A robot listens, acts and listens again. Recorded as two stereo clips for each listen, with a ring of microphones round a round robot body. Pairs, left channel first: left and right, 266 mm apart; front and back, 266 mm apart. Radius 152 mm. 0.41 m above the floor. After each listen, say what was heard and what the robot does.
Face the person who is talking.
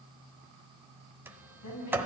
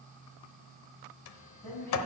The woman speaking: 85° left. Turn 85° left.
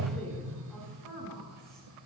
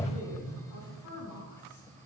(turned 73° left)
Found it: a woman speaking, straight ahead, over 4 m away.